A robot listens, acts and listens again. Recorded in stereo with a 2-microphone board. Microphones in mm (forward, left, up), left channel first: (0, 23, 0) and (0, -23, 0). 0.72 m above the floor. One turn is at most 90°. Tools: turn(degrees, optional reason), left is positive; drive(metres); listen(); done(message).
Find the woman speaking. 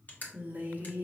turn(degrees=-35, reason="The woman speaking: about 35° right or 145° right.")
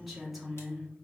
done("Facing the woman speaking, 1 to 2 m away.")